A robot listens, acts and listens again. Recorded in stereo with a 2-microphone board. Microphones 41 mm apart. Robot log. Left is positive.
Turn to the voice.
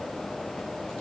cmd idle
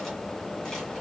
cmd idle
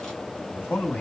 note: The man speaking: about 40° left or 140° left.
cmd yaw +40
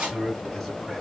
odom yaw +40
end: Facing the man speaking.